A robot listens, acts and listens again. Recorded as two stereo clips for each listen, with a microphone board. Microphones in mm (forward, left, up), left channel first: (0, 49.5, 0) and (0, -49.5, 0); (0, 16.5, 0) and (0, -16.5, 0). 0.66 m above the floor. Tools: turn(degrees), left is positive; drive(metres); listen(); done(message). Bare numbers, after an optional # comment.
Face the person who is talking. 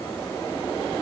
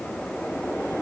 listen()
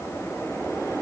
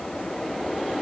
listen()
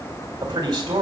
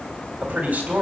# The man speaking: about 45° right or 135° right.
turn(-45)
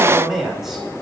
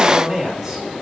done("Found it: a man speaking, straight ahead, 2 to 4 m away.")